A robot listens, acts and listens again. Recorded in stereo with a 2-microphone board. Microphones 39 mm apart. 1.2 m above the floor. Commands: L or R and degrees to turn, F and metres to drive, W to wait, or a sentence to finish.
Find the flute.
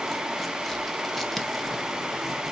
W
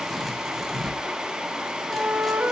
R65
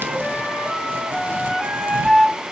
Facing the flute.